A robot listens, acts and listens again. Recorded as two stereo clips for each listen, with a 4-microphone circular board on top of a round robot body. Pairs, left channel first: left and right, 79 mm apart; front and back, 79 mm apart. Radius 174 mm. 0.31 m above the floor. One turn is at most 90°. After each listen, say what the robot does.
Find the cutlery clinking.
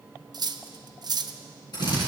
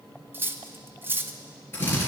Turn 90° right.
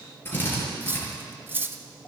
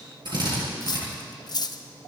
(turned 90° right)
Turn 25° right.
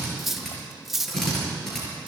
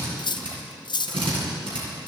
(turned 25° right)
Facing the cutlery clinking.